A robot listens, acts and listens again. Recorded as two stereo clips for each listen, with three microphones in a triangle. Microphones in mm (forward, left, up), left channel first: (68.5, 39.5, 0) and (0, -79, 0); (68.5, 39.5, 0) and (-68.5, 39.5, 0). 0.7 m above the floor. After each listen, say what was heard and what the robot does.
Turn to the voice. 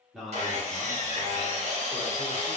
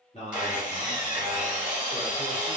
The man speaking: 25° right. Turn 25° right.
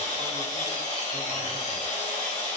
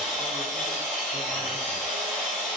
Keep listening.
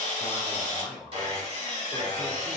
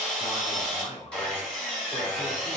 The man speaking is now 10° right. Turn 10° right.
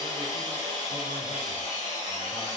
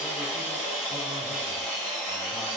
Keep listening.
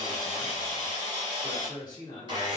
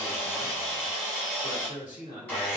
Facing the man speaking.